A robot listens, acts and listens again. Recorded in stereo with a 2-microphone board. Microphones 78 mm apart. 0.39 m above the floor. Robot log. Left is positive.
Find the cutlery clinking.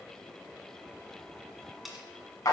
cmd yaw -30
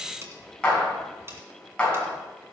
note: So it is at 145° right.
cmd yaw -145
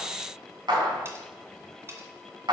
note: The cutlery clinking is now 35° right.
cmd yaw -35
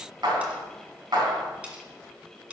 note: The cutlery clinking is now 15° right.
cmd yaw -15
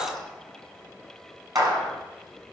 cmd idle
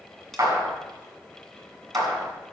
cmd idle
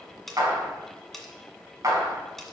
end: Found it: cutlery clinking, straight ahead, 1 to 2 m away.